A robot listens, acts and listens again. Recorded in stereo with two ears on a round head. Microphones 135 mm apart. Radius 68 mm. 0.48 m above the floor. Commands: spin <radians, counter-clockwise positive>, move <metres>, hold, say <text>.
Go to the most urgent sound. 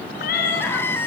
spin 0.52
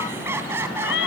spin -0.26
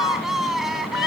move 1.0
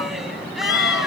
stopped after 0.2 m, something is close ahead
hold
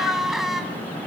say Something is in my way. I am facing the crying but have not reached it.